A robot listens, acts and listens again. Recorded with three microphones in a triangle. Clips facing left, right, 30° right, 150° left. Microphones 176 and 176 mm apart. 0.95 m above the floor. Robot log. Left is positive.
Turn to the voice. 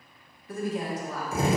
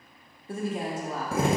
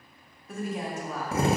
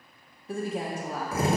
note: The woman speaking: 150° right.
cmd yaw -150
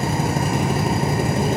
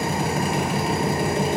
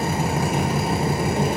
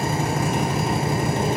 cmd idle
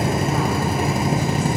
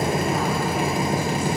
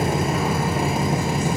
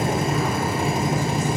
cmd idle
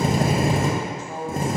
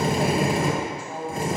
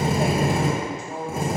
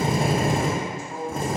note: The woman speaking is now 10° right.
cmd yaw -10
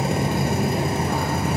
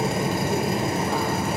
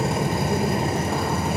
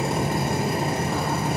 cmd idle
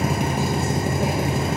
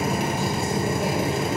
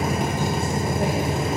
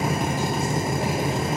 cmd idle
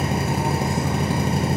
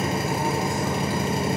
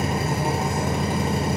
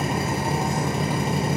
end: I heard a woman speaking from this way, but can't make it out now.